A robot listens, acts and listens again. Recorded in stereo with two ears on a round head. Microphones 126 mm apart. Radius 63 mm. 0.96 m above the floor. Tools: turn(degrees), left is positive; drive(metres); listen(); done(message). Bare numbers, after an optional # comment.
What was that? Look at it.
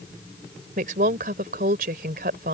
# The woman speaking: about 70° right or 110° right.
turn(-70)
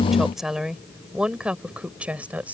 # So it is at 10° right.
turn(-10)
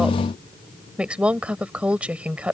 # The woman speaking is now 10° right.
turn(-10)
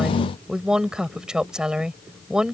done("Facing the woman speaking.")